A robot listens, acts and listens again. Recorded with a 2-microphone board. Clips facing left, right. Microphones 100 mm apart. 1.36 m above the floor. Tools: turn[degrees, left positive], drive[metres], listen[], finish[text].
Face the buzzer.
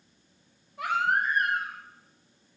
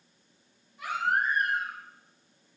Action: listen[]
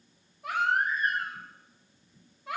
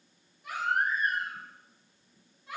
Action: listen[]
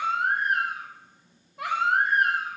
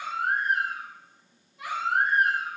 Action: finish[I can't make out a buzzer to turn to.]